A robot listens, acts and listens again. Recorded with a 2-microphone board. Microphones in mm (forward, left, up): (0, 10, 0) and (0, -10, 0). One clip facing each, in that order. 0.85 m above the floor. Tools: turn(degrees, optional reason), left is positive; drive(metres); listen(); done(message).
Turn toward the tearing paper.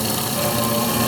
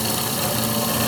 listen()
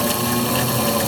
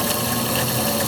listen()
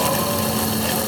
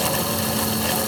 done("I can't make out tearing paper.")